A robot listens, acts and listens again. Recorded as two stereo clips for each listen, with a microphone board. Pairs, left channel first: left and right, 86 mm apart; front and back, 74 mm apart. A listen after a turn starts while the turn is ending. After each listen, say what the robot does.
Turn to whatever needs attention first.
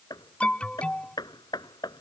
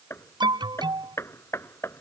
Turn 170° left.
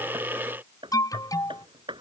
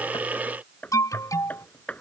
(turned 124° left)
Turn 45° left.
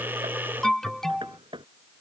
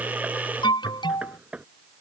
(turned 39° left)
Found it: an alarm, straight ahead.